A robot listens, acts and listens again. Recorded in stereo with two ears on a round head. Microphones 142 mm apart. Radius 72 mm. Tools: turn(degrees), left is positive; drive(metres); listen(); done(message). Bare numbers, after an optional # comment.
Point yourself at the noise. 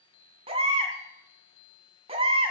# The baby crying: about 35° right or 145° right.
turn(-35)
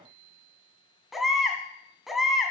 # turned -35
done("Found it: a baby crying, straight ahead, 1 to 2 m away.")